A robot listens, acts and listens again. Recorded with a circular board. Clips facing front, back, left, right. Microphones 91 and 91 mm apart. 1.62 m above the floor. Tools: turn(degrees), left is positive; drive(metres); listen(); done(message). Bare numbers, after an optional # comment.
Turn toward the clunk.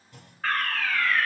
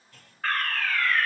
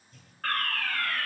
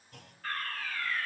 # The clunk: 70° right.
turn(-70)
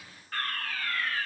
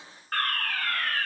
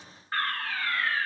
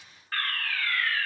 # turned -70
done("Facing where the clunk came from. I can't hear it now.")